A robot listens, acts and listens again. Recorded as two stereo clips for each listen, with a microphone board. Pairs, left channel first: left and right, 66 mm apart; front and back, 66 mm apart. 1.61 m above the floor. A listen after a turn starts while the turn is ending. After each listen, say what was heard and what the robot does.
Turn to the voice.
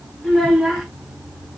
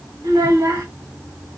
The child speaking: straight behind. Turn 180° left.
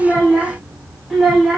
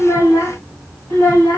Facing the child speaking.